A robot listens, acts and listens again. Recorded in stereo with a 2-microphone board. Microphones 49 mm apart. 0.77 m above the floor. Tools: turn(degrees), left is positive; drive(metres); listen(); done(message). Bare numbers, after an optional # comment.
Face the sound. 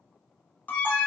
# The alarm: about 35° left or 145° left.
turn(35)
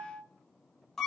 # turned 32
done("Found it: an alarm, straight ahead.")